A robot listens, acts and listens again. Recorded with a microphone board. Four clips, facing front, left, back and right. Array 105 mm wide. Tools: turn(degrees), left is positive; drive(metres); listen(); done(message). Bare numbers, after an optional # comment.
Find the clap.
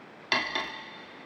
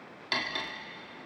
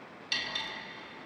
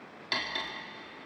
listen()
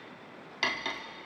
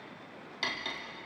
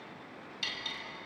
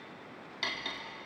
listen()
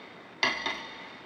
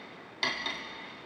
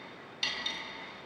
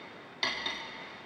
done("I can't make out a clap, only cutlery clinking.")